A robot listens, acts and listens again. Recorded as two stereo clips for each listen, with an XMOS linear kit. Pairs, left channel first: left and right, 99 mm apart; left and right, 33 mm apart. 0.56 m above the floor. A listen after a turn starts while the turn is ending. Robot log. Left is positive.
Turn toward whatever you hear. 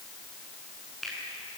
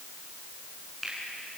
cmd yaw +30
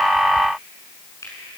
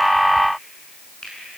note: So it is at 150° left.
cmd yaw +150
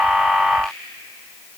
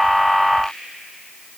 cmd idle
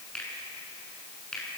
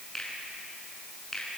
note: The finger snap is now 10° left.
cmd yaw +10
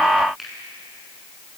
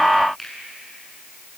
end: Facing the finger snap, over 4 m away.